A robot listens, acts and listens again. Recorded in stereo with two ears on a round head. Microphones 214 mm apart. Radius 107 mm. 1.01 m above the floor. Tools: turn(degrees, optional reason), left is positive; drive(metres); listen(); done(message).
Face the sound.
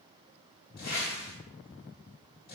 turn(degrees=40, reason="The whoosh: about 40° left or 140° left.")
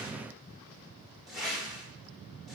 done("Found it: a whoosh, straight ahead.")